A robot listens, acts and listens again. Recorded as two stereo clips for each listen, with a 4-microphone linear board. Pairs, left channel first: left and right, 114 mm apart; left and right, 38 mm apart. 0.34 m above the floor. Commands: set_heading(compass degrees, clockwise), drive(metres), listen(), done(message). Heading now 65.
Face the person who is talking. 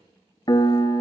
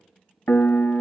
listen()
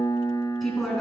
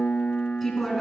set_heading(35)
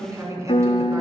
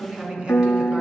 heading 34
set_heading(64)
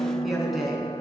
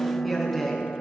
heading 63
done("Found it: a woman speaking, straight ahead, 2 to 4 m away.")